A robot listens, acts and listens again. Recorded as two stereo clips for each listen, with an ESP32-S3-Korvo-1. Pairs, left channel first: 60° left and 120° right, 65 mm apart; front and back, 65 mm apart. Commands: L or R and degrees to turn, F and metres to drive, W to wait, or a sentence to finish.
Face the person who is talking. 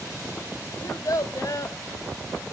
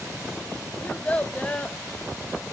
L70
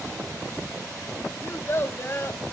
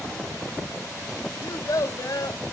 L15
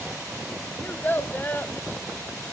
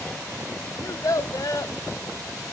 Found it: a child speaking, straight ahead.